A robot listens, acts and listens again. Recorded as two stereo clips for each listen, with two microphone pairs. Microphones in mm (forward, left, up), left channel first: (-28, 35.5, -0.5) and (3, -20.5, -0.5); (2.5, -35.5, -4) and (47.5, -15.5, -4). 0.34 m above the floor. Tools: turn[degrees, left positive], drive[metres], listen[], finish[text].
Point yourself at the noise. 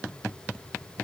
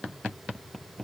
Action: listen[]
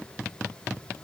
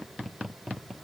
Action: listen[]
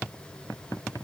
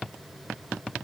Action: finish[I can't make out anything to turn to.]